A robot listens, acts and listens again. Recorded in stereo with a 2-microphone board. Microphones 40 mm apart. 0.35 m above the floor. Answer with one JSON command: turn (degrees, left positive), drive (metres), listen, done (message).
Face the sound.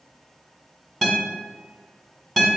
{"turn": 30}
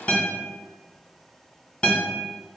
{"turn": 140}
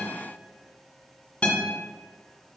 {"turn": 30}
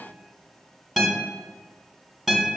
{"done": "Found it: a guitar, straight ahead, 1 to 2 m away."}